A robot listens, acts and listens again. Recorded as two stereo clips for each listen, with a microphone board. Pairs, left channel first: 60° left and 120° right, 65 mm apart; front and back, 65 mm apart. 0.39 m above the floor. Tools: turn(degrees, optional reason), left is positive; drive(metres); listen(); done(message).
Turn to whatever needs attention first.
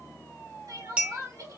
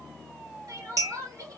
turn(degrees=-145, reason="The crying: 145° right.")
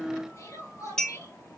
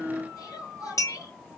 turn(degrees=25, reason="The crying is now 25° left.")
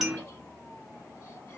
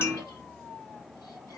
listen()
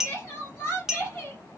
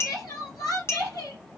done("Found it: crying, straight ahead, 2 to 4 m away.")